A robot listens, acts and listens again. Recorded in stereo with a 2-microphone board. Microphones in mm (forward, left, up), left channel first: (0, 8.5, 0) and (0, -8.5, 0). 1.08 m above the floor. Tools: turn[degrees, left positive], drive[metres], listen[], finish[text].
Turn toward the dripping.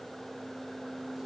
Action: listen[]
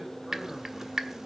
Thought: The dripping: about 35° right or 145° right.
Action: turn[-35]
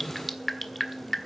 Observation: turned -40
Action: finish[Found it: dripping, straight ahead, 1 to 2 m away.]